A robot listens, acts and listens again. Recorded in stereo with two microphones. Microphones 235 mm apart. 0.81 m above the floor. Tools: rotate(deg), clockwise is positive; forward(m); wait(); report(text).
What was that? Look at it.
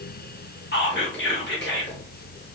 rotate(-50)
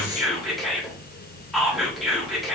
report("Facing the whispering, 1 to 2 m away.")